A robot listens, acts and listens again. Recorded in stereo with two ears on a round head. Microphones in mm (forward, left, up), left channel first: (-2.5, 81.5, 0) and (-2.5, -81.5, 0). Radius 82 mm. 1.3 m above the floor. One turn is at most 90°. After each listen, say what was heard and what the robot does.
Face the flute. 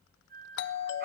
The flute: about 55° right or 125° right. Turn 55° right.
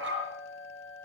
Keep listening.
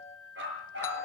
Facing the flute, over 4 m away.